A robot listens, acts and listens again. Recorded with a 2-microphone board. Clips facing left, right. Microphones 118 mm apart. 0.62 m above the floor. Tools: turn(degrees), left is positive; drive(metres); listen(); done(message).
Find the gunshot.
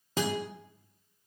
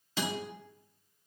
listen()
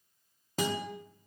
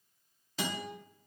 listen()
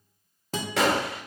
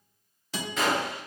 turn(degrees=90)
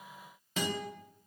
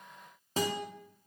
done("I heard a gunshot from this way, but can't make it out now.")